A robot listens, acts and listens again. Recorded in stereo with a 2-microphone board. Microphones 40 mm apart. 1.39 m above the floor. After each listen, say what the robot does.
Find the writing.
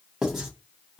Turn 30° right.
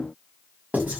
Turn 135° right.
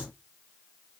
Keep listening.
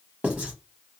Turn 35° right.
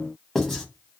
Facing the writing.